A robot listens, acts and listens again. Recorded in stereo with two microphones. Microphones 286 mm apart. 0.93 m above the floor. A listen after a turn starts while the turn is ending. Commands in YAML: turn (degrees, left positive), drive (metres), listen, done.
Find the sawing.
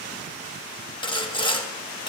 turn: 15
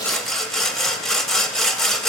done: "Found it: sawing, straight ahead, under 1 m away."